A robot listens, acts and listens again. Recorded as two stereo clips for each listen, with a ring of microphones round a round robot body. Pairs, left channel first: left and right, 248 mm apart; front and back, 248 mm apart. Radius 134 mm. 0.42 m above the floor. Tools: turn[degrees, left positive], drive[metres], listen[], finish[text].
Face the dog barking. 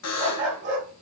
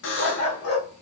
Thought: The dog barking: 25° right.
Action: turn[-25]
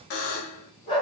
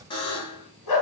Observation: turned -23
Thought: The dog barking is now 20° left.
Action: turn[20]
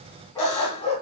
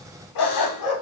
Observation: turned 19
Thought: The dog barking is now 20° left.
Action: turn[20]
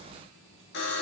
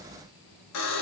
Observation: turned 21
Action: listen[]
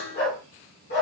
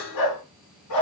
Thought: The dog barking is now 35° left.
Action: turn[35]
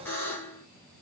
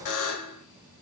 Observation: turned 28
Action: listen[]
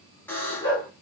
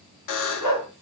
Thought: The dog barking is now 15° left.
Action: turn[15]
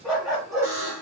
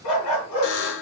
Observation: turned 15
Action: finish[Facing the dog barking.]